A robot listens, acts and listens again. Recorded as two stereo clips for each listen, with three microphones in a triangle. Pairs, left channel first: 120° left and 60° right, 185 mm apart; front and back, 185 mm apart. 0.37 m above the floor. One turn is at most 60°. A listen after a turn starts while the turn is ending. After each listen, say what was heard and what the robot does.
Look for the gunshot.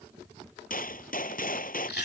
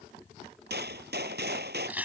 The gunshot: 160° left. Turn 60° left.
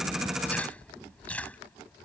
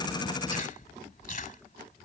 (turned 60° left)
Nothing new. It was at 100° left. Turn 60° left.
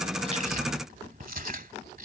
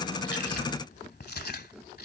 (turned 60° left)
Nothing new. It was at 40° left. Turn 40° left.
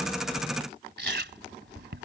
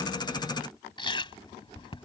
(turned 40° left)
I heard a gunshot from this way, but can't make it out now.